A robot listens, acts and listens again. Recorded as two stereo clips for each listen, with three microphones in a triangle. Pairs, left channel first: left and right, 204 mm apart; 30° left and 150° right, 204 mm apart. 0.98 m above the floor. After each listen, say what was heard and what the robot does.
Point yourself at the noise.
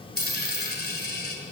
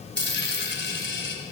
The dropped coin: 55° left. Turn 55° left.
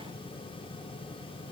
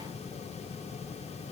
I heard a dropped coin from this way, but can't make it out now.